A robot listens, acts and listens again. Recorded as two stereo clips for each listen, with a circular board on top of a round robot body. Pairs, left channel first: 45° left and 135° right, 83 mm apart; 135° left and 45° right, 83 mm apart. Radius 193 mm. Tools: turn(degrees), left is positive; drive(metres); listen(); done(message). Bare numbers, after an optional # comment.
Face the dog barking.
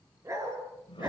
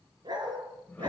# The dog barking: 80° right.
turn(-80)
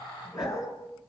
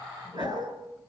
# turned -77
done("Facing the dog barking.")